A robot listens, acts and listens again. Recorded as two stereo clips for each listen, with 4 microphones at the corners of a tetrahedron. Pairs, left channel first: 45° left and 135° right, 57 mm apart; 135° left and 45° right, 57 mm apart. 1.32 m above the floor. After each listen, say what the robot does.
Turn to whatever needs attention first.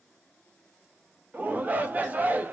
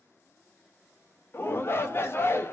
Turn 170° left.
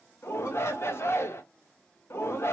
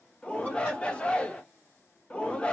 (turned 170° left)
Turn 70° left.
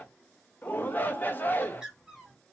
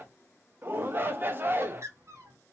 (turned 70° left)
Facing the shout.